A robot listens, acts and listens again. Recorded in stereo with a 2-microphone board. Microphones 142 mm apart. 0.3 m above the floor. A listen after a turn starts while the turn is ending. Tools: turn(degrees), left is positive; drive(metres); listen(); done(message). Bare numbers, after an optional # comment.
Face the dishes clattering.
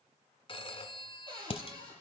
# The dishes clattering: about 45° left or 135° left.
turn(45)
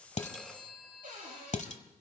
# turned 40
# So it is at 85° left.
turn(85)
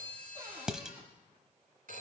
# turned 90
done("Facing the dishes clattering.")